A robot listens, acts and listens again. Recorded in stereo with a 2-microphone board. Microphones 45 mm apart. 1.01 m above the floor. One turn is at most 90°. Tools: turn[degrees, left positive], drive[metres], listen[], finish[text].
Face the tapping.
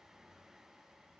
Action: listen[]
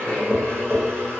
Thought: The tapping: about 15° right or 165° right.
Action: turn[-15]
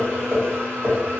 Thought: So it is at 150° right.
Action: turn[-90]
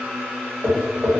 Thought: The tapping is now 55° right.
Action: turn[-55]
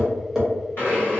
Action: finish[Found it: tapping, straight ahead, 1 to 2 m away.]